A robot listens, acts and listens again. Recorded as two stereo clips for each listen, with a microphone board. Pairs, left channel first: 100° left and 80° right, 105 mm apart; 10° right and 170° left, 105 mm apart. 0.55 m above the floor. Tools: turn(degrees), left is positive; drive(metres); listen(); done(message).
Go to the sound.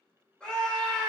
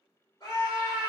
turn(degrees=25)
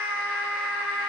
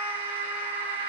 drive(metres=1.0)
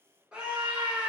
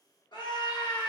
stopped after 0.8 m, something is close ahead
done("I am next to the scream.")